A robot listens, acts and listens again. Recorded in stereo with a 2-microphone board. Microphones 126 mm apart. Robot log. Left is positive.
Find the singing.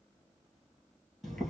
cmd idle
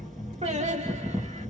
note: The singing: about 55° right or 125° right.
cmd yaw -55
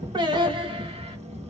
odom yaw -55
note: So it is at 40° right.
cmd yaw -40
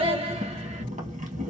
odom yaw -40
note: The singing is now 45° right.
cmd yaw -45
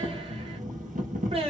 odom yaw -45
note: The singing is now 45° right.
cmd yaw -45
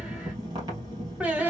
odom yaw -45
note: The singing is now 10° right.
cmd yaw -10
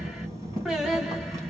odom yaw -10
end: Facing the singing, 1 to 2 m away.